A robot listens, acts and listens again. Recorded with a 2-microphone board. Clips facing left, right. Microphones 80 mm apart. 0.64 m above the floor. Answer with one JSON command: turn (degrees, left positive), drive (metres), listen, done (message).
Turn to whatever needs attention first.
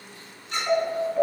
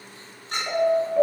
{"turn": -30}
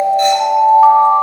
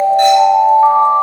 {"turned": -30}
{"turn": 15}
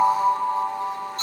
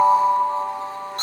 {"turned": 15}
{"done": "Found it: an alarm, straight ahead."}